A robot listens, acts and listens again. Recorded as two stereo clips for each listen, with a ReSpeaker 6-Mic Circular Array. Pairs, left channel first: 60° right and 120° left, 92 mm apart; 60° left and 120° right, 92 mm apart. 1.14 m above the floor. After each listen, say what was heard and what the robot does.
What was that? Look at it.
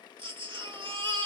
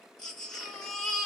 The baby crying: 145° left. Turn 145° left.
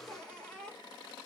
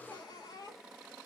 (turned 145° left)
The baby crying is now 20° left. Turn 20° left.
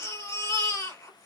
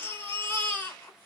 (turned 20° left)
Facing the baby crying, 2 to 4 m away.